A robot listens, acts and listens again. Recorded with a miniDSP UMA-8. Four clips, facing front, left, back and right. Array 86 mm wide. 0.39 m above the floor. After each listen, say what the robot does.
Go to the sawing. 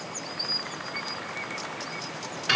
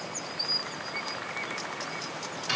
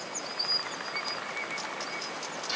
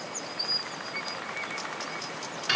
Keep listening.
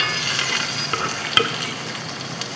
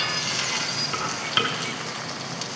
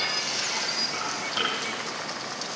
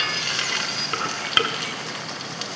Keep listening.
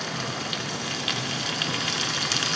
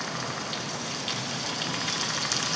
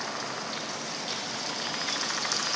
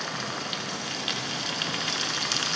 I can't make out sawing, only frying.